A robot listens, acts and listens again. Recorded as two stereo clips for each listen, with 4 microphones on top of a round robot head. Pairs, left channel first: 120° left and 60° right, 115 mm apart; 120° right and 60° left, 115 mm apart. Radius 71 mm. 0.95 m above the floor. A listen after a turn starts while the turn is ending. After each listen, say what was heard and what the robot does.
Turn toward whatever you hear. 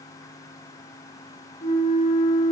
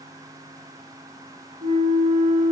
The flute: 90° left. Turn 90° left.
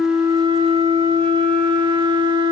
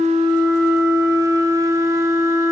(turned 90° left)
The flute is now 10° right. Turn 10° right.
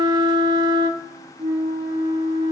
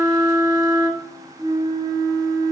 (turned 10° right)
Facing the flute.